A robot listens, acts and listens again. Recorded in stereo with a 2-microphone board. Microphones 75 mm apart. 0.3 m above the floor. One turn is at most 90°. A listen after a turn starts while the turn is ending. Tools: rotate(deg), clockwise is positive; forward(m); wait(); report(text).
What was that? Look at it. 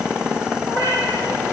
rotate(-40)
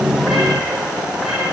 wait()
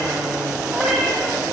report("Found it: a cat meowing, straight ahead, over 4 m away.")